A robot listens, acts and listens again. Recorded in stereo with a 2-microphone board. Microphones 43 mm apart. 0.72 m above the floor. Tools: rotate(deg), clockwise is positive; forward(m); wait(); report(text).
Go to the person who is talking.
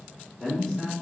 rotate(-30)
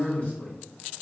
rotate(-145)
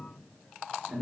rotate(40)
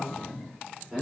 rotate(10)
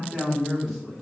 forward(1.0)
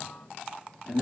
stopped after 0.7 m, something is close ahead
report("I am next to the man speaking.")